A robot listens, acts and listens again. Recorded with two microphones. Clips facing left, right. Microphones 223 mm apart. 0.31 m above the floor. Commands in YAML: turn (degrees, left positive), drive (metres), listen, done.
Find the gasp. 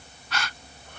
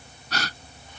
turn: -45
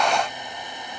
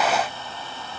listen: true
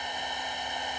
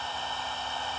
done: "I heard a gasp, but can't make it out now. It was about straight ahead or 90° right."